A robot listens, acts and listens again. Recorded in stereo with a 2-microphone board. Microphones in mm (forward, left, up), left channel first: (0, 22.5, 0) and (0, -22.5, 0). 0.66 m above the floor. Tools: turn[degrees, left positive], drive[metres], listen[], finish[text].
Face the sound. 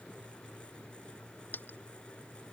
Thought: The dropped coin: about 45° left or 135° left.
Action: turn[45]
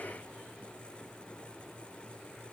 Action: listen[]
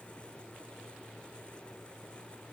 Action: finish[I heard a dropped coin, but can't make it out now. It was about straight ahead or 90° left.]